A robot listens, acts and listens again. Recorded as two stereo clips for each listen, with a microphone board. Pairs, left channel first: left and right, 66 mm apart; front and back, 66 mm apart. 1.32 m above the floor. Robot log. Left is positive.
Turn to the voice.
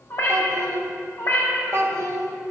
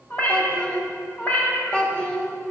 note: The child speaking: 70° right.
cmd yaw -70
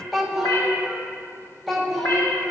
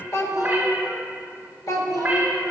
end: Found it: a child speaking, straight ahead, under 1 m away.